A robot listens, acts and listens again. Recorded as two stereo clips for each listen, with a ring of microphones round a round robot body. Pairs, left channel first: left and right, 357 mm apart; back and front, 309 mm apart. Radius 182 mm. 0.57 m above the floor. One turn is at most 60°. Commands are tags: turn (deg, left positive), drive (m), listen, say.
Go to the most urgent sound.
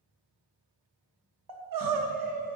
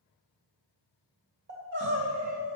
<turn deg="-60"/>
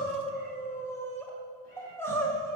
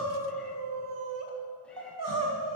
<drive m="1.0"/>
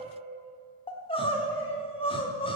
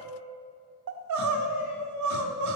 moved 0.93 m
<turn deg="15"/>
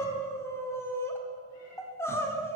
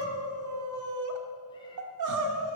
<turn deg="10"/>
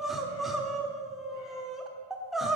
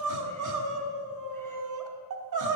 <drive m="1.0"/>
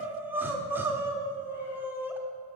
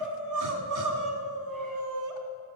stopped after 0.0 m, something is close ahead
<say>I am next to the crying.</say>